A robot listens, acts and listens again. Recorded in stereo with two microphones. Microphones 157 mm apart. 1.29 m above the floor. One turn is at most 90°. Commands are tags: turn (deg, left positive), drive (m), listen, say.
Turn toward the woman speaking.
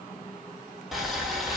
<listen/>
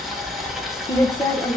<turn deg="30"/>
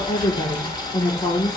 <turn deg="25"/>
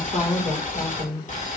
<turn deg="90"/>
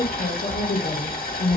<turn deg="80"/>
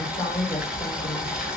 <turn deg="15"/>
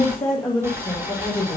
<say>Found it: a woman speaking, straight ahead, 2 to 4 m away.</say>